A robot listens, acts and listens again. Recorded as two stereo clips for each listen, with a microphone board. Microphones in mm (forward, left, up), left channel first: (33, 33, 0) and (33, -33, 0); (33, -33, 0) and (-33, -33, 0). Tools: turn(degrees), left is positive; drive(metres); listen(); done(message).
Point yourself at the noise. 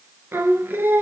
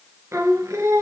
turn(degrees=-140)
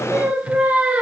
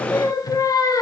turn(degrees=-20)
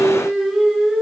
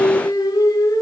done("Facing the singing, 1 to 2 m away.")